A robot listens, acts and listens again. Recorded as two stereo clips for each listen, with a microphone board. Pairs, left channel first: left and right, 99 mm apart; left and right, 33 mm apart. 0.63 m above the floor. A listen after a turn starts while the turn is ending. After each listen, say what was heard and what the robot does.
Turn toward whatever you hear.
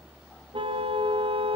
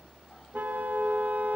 The car horn: about 65° right or 115° right. Turn 65° right.
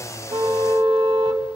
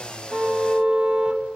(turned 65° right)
So it is at 45° right. Turn 45° right.
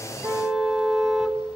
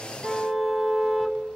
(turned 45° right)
Found it: a car horn, straight ahead.